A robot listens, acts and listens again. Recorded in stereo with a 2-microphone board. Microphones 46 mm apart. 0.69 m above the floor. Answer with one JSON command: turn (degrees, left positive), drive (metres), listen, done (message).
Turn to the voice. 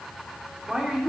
{"turn": -30}
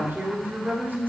{"turn": -135}
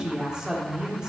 {"turn": -20}
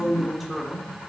{"done": "Facing the woman speaking."}